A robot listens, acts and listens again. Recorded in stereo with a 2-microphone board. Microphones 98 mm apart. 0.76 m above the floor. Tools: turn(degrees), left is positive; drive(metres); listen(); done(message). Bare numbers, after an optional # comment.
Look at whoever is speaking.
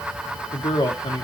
# The man speaking: about 50° left or 130° left.
turn(50)
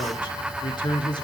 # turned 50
# So it is at 65° left.
turn(65)
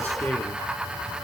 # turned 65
# The man speaking is now 20° left.
turn(20)
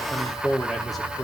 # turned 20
done("Found it: a man speaking, straight ahead.")